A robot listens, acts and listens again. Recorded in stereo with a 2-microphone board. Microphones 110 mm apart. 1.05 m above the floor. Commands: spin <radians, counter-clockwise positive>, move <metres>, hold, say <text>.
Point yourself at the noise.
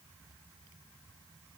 hold
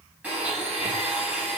spin -0.52
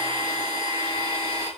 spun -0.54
spin 0.26
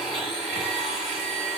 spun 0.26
say Facing the blender, over 4 m away.